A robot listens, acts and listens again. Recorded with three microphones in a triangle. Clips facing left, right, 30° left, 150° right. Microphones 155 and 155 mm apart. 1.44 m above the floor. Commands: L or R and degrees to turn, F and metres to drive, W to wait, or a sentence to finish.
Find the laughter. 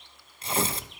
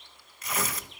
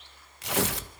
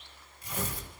W
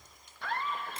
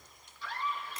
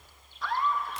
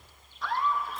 L120
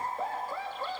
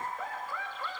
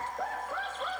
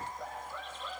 L35
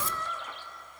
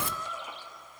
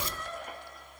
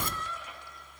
R10
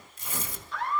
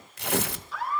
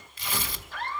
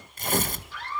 Found it: laughter, straight ahead, over 4 m away.